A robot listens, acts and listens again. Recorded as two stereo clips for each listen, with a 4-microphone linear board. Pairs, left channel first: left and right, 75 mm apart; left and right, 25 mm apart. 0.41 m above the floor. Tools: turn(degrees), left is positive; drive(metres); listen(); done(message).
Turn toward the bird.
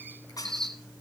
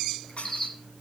turn(degrees=30)
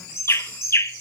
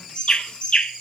turn(degrees=145)
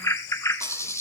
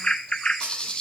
turn(degrees=40)
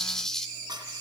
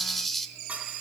done("Facing the bird, 1 to 2 m away.")